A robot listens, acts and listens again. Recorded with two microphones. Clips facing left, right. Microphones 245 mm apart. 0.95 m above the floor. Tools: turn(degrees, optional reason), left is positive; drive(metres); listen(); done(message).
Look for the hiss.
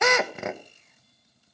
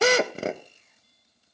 listen()
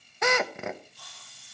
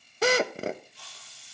turn(degrees=-90)
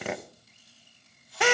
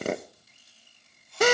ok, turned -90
done("Found it: a hiss, straight ahead, over 4 m away.")